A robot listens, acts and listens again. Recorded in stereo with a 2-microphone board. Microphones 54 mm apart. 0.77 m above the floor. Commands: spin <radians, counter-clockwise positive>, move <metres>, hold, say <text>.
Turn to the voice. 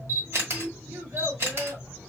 spin -1.31
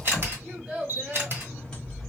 spin -0.26
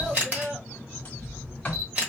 say Facing the child speaking.